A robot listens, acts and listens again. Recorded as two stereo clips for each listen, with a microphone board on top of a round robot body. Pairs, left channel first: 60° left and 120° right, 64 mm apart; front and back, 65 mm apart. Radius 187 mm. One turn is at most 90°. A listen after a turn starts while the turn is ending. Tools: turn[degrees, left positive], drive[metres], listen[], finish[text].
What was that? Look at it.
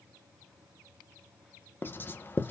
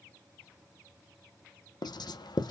Action: finish[Found it: writing, straight ahead, 1 to 2 m away.]